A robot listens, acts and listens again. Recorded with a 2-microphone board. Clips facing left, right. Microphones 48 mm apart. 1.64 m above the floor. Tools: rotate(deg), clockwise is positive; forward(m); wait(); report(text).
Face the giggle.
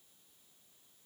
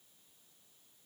wait()
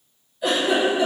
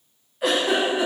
rotate(60)
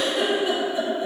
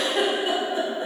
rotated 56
rotate(55)
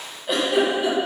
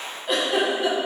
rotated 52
report("Found it: a giggle, straight ahead.")